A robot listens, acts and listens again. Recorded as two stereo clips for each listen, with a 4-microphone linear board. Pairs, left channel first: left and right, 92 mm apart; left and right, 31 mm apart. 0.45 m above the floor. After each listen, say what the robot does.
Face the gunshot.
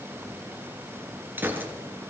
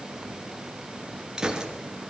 Turn 20° right.
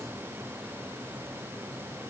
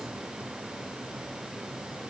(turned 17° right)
Keep listening.
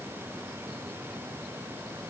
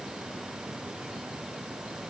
I heard a gunshot, but can't make it out now. It was about 5° right or 140° right.